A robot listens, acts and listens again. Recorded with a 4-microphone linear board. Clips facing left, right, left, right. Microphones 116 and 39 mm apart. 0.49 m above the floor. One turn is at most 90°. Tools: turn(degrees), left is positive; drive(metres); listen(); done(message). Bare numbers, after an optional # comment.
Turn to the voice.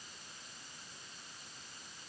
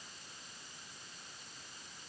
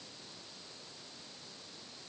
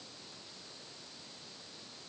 listen()
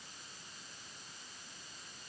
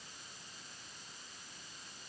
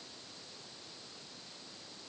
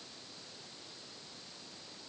listen()
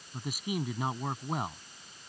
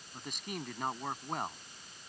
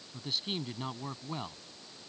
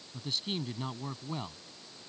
turn(30)
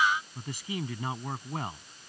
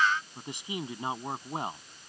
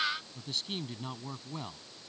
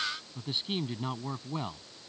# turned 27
# So it is at 20° right.
turn(-20)
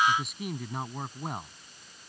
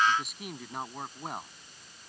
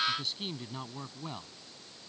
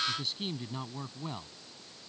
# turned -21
done("Facing the man speaking.")